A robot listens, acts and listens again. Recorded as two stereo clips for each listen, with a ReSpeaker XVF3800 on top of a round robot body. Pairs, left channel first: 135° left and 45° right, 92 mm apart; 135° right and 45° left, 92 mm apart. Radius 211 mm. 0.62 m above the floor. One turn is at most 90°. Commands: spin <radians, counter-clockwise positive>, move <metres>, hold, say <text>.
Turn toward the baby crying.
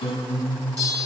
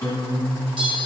hold
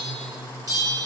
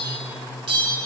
hold
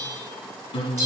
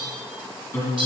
say I can't make out a baby crying to turn to.